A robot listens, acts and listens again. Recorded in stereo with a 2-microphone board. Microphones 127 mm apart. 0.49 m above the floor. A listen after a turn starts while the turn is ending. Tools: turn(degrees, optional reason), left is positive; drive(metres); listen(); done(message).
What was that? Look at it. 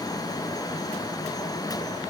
listen()
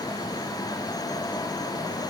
listen()
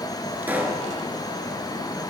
turn(degrees=-30)
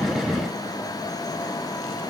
listen()
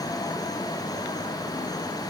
done("I heard a pop, but can't make it out now. It was about 15° left or 135° right.")